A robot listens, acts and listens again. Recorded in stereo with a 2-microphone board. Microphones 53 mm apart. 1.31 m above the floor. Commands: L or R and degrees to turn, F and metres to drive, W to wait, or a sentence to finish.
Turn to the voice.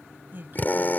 R40
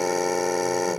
W
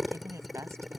R95
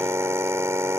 W
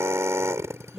R15
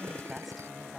Facing the woman speaking.